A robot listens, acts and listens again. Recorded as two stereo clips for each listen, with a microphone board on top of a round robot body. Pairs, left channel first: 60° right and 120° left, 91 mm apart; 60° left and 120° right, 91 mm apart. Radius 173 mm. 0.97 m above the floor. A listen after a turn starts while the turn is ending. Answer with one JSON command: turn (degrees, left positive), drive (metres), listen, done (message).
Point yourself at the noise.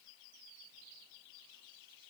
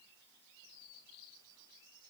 {"listen": true}
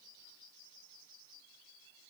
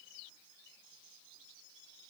{"listen": true}
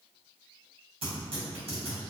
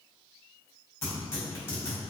{"turn": 120}
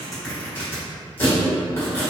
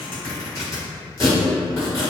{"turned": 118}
{"done": "Facing the tearing paper."}